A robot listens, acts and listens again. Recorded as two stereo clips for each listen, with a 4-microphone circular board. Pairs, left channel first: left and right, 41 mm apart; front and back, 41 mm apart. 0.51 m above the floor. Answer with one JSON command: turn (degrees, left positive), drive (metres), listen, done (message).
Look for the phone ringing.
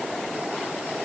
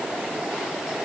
{"listen": true}
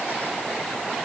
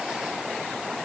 {"listen": true}
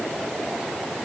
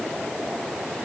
{"done": "I can't make out a phone ringing."}